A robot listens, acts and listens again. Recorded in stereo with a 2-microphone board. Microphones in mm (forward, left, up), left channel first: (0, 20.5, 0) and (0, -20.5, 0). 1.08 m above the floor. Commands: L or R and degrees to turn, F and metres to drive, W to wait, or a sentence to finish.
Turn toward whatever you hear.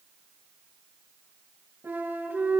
R60
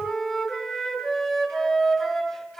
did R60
Found it: a flute, straight ahead.